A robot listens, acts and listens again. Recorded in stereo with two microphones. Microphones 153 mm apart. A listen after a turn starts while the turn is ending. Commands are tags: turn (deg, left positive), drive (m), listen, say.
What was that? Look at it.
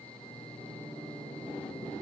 <listen/>
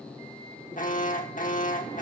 <turn deg="60"/>
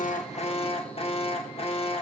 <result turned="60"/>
<turn deg="45"/>
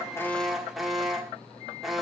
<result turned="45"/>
<say>Found it: an alarm, straight ahead, 1 to 2 m away.</say>